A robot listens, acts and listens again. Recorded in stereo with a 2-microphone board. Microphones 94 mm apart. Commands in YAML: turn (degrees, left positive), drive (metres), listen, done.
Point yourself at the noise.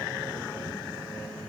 listen: true
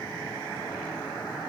listen: true
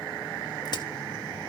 turn: 50
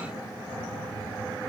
listen: true
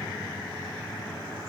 done: "I heard a crack, but can't make it out now. It was about straight ahead or 80° left."